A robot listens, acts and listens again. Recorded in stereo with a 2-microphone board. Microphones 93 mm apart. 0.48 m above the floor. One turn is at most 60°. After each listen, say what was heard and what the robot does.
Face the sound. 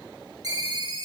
The ringtone: about 50° right or 130° right. Turn 50° right.
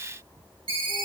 So it is at 70° right. Turn 60° right.
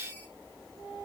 Nothing new. It was at 10° right. Turn 10° right.
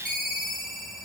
Found it: a ringtone, straight ahead, 1 to 2 m away.